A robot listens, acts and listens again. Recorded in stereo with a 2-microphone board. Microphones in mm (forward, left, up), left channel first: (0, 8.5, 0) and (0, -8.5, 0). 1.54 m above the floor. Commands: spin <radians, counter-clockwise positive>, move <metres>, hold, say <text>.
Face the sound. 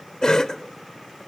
spin 0.87
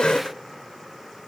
spin 1.31
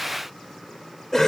spin 0.17
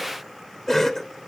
say Found it: a cough, straight ahead.